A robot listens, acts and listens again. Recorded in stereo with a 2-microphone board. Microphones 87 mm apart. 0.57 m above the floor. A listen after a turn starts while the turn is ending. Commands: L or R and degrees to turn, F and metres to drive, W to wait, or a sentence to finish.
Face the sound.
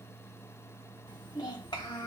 L55
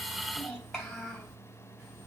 Found it: a child speaking, straight ahead, 2 to 4 m away.